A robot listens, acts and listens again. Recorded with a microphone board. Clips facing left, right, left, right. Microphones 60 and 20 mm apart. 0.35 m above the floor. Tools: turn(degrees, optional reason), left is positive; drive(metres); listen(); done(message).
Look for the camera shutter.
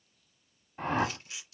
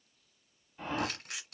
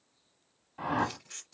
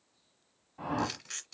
turn(degrees=-90)
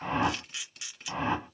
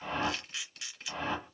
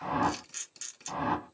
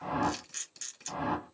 done("Found it: a camera shutter, straight ahead.")